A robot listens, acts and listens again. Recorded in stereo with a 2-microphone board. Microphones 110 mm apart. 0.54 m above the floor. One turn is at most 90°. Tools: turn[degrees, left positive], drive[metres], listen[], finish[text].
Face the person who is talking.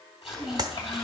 Thought: The child speaking: about 45° left or 135° left.
Action: turn[45]
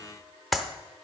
Action: listen[]
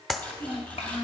Thought: So it is at 90° left.
Action: turn[90]
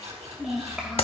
Action: finish[Found it: a child speaking, straight ahead, 1 to 2 m away.]